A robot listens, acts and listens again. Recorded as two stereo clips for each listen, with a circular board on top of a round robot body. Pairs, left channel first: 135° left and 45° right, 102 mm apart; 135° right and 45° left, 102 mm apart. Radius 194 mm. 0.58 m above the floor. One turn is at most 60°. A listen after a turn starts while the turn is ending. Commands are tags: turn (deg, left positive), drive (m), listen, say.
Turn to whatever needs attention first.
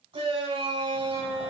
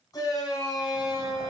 <turn deg="-60"/>
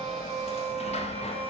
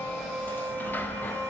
<turn deg="-15"/>
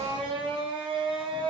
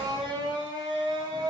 <say>Found it: a shout, straight ahead, over 4 m away.</say>